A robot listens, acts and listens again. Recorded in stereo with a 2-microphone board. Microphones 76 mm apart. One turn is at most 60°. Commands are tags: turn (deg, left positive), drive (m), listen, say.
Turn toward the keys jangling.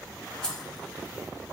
<turn deg="30"/>
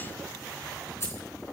<turn deg="60"/>
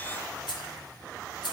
<turn deg="60"/>
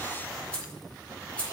<turn deg="15"/>
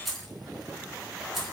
<say>Facing the keys jangling.</say>